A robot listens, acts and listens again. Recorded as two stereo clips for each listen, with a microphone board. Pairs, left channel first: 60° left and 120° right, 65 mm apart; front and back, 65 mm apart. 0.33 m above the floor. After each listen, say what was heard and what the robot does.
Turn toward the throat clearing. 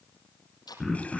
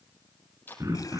The throat clearing: 150° left. Turn 150° left.
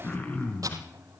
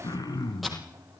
Found it: throat clearing, straight ahead, 2 to 4 m away.